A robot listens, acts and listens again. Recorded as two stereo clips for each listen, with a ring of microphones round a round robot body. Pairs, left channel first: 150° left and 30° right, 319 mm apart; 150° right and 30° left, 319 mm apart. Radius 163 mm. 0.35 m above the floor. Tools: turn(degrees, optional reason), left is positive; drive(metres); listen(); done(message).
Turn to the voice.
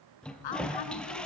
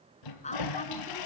turn(degrees=140, reason="The woman speaking: 140° left.")
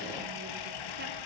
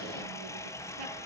listen()
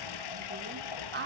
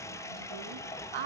turn(degrees=30, reason="The woman speaking is now 30° left.")
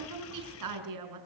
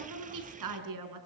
done("Found it: a woman speaking, straight ahead, over 4 m away.")